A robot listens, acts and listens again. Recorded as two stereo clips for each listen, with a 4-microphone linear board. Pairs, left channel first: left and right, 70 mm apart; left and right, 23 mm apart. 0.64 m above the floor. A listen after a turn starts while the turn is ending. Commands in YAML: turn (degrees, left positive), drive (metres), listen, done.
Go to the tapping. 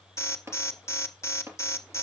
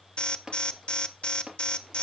turn: -40
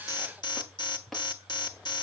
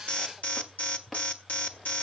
listen: true
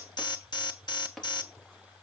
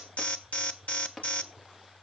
drive: 1.0
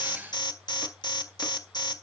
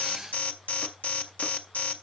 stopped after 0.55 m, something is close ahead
listen: true
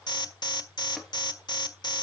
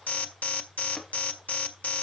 listen: true
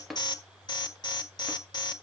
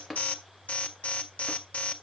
done: "Blocked. The tapping is further on, straight ahead."